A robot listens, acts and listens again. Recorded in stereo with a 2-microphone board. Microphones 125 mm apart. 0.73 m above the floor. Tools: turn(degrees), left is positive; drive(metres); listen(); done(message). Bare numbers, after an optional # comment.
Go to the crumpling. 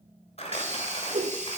# The crumpling: about 55° left or 125° left.
turn(55)
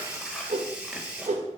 listen()
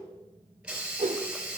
listen()
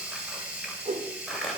drive(1.0)
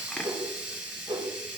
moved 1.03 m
# The crumpling is now 10° left.
turn(10)
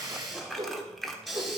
drive(1.0)
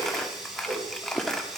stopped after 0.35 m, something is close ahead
done("I am next to the crumpling.")